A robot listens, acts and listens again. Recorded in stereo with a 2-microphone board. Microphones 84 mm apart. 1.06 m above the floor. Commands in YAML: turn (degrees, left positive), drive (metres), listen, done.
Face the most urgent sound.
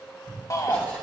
turn: 40
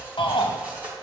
turn: 100
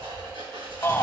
turn: 30
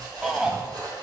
turn: -10
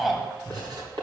done: "Found it: a shout, straight ahead, 1 to 2 m away."